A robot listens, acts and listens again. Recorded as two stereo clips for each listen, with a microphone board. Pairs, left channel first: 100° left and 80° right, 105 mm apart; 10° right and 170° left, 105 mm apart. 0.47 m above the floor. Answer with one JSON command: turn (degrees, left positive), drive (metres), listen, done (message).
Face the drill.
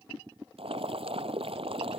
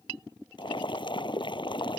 {"listen": true}
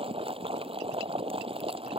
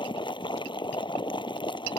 {"listen": true}
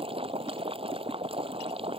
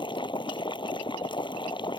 {"done": "I can't make out a drill, only boiling."}